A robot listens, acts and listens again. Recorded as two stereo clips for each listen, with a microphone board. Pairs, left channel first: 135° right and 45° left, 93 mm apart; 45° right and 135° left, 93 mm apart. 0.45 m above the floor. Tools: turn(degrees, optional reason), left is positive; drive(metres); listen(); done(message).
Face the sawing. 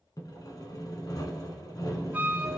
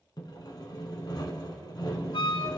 turn(degrees=-85, reason="The sawing: 85° right.")
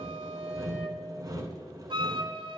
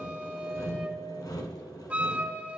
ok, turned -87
done("Facing the sawing.")